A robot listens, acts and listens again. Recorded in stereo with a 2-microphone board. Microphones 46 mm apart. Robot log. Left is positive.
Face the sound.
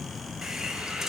cmd yaw -30
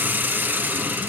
note: So it is at 135° right.
cmd yaw -135
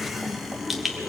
end: Facing the hiss, 1 to 2 m away.